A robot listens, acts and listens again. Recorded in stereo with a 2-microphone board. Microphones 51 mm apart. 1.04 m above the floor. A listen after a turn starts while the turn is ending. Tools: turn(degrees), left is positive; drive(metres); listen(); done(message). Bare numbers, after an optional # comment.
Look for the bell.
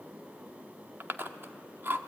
listen()
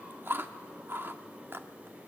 listen()
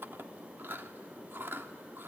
done("I can't make out a bell to turn to.")